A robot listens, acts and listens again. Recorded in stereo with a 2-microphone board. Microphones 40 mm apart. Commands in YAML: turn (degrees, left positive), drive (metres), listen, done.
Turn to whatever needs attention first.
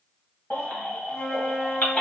turn: 45
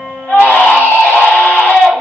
turn: 90
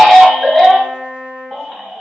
done: "Facing the baby crying, 1 to 2 m away."